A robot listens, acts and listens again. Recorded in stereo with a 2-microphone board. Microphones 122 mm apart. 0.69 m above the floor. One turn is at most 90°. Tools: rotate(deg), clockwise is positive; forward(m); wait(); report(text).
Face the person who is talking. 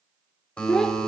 rotate(-30)
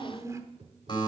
rotate(25)
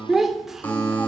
report("Facing the child speaking, 1 to 2 m away.")